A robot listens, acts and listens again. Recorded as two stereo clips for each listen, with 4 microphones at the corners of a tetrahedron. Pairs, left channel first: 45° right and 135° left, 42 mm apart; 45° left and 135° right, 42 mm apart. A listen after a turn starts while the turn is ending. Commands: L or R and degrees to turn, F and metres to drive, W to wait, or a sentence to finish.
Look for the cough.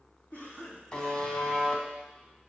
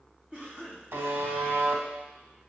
R80
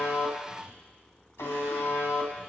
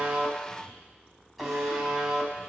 W
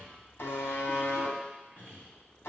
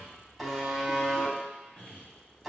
R10
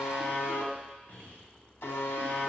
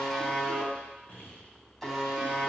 Found it: a cough, straight ahead, 2 to 4 m away.